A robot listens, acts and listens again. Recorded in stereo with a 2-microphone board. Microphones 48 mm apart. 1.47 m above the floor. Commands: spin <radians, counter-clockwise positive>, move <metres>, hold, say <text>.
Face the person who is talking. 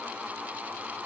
hold
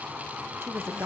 spin -1.13
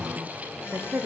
spin -0.87
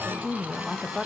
say Found it: a woman speaking, straight ahead.